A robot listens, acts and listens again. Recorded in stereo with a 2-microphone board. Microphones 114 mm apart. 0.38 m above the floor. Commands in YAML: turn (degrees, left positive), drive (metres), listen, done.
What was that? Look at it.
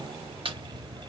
turn: -55
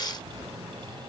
listen: true
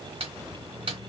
turn: -65
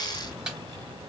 done: "Facing the snare drum."